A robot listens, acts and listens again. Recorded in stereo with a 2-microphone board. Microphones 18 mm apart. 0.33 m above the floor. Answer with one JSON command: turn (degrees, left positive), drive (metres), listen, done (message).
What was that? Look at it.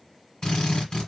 {"turn": 40}
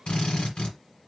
{"turn": 100}
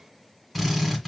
{"done": "Facing the drill."}